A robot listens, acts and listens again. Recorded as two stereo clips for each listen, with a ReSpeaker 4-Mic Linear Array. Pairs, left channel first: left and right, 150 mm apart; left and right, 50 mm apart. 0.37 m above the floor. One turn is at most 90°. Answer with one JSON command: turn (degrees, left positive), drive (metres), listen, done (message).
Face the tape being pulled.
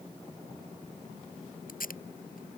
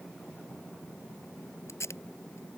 {"turn": 90}
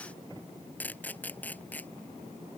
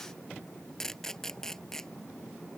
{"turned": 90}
{"turn": 10}
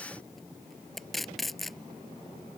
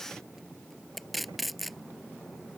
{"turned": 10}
{"done": "Facing the tape being pulled."}